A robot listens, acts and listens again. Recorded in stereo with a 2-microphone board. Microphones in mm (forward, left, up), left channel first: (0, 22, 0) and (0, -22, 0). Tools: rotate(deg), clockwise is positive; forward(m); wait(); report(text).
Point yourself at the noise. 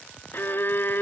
rotate(-55)
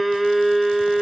report("Facing the violin.")